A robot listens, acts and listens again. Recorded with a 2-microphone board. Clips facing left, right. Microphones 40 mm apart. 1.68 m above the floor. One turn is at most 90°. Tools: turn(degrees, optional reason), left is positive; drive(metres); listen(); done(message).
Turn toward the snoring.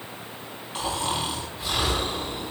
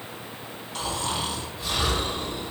turn(degrees=15, reason="The snoring: about 15° left or 165° left.")
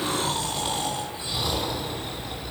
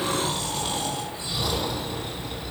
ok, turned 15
done("Found it: snoring, straight ahead.")